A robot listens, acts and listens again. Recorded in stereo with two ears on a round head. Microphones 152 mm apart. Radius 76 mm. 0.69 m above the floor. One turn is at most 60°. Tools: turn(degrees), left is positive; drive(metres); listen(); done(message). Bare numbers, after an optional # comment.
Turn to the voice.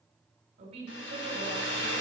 # The woman speaking: about 35° right or 145° right.
turn(-35)
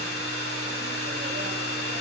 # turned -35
listen()
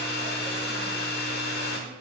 listen()
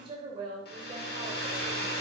# The woman speaking: about 30° right or 150° right.
turn(-30)
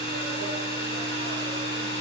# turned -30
listen()
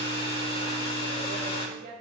# So it is at 120° right.
turn(-60)
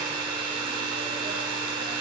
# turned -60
# Nothing new. It was at 60° right.
turn(-60)
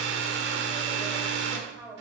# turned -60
done("Found it: a woman speaking, straight ahead, 2 to 4 m away.")